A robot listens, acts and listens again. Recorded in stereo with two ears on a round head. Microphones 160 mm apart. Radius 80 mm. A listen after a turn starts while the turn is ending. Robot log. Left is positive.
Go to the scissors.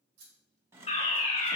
note: The scissors: about 35° right or 145° right.
cmd yaw -35
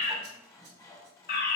cmd idle
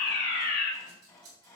note: So it is at 100° right.
cmd yaw -100
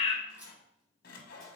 cmd idle
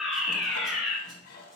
cmd idle
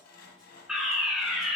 end: I heard scissors from this way, but can't make it out now. I did not reach it.